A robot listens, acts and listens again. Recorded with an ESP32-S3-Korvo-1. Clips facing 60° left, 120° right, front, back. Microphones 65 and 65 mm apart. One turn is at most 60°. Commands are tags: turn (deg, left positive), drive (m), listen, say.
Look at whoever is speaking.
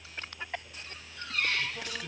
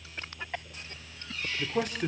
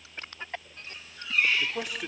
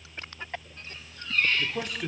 <turn deg="-60"/>
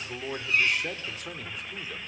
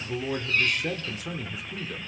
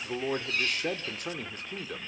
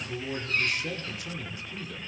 <turn deg="-30"/>
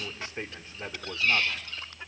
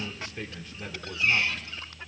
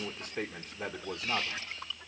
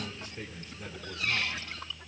<say>Facing the man speaking, 1 to 2 m away.</say>